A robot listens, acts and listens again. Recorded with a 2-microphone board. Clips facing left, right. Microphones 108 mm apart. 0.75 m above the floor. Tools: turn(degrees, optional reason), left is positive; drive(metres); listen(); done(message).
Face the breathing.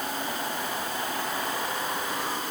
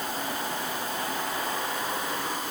listen()
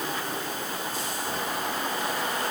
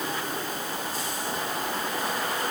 listen()
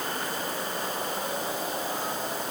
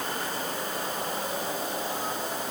done("I can't make out breathing to turn to.")